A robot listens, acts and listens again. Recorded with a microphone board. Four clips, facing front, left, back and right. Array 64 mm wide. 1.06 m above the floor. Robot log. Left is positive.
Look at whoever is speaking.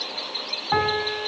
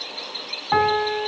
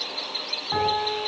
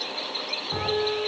cmd idle
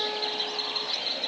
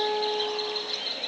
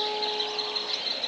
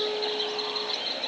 cmd idle
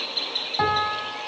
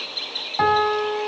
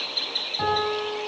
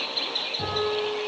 end: I can't make out anyone speaking to turn to.